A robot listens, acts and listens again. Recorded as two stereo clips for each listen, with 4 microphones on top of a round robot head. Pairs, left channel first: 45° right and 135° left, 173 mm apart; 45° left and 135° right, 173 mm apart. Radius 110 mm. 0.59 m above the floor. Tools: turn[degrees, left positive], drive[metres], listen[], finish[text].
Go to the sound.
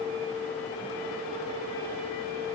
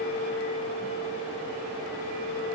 Action: listen[]
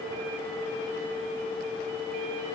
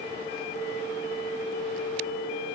Action: listen[]
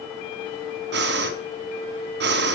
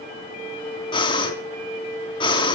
Thought: The breathing: 110° left.
Action: turn[110]
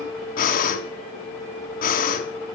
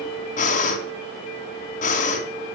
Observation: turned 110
Action: drive[1.0]
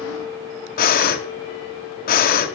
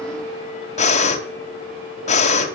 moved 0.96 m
Thought: The breathing is now 10° right.
Action: turn[-10]
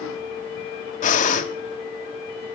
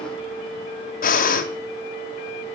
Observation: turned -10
Action: drive[1.0]
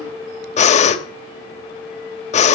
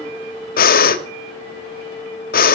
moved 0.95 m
Action: drive[1.0]
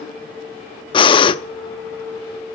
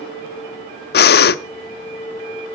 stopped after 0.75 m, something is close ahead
Thought: The breathing is now 15° left.
Action: turn[15]
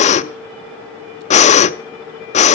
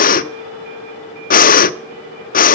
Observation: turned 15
Action: finish[Arrived at the breathing, straight ahead.]